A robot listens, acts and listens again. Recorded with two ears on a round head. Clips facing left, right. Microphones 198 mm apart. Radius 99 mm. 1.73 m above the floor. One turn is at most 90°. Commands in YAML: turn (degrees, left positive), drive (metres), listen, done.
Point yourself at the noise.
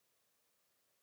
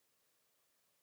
listen: true
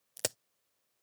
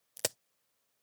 turn: 30
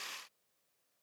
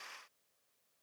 listen: true
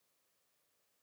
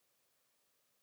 done: "I heard a crack, but can't make it out now. It was about 30° right or 150° left."